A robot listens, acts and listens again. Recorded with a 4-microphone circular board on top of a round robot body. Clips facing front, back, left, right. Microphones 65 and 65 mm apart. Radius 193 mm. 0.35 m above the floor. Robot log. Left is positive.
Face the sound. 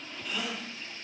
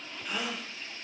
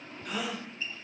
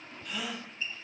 note: The gasp: 130° left.
cmd yaw +130
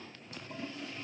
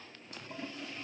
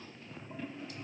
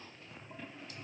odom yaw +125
end: Facing where the gasp came from. I can't hear it now.